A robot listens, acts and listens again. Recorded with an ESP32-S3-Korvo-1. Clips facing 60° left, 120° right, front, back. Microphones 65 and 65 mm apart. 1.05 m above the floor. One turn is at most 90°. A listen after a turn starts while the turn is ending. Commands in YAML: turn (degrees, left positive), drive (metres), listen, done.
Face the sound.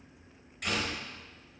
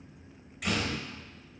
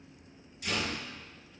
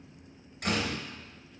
turn: 90
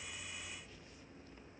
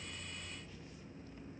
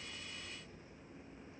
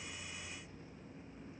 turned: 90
turn: 60
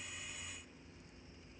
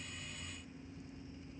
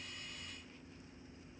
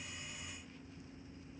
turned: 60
done: "Facing where the door slam came from. I can't hear it now."